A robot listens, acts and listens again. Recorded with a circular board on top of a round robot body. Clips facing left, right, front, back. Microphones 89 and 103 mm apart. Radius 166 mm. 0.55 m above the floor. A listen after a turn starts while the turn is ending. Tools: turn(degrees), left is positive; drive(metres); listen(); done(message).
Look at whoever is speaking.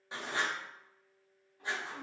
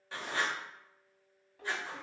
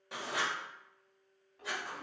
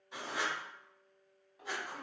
turn(degrees=-95)
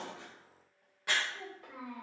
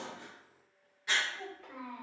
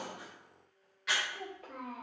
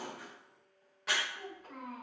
turn(degrees=15)
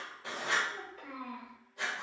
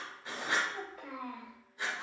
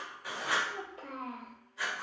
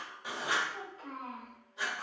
done("Found it: a child speaking, straight ahead.")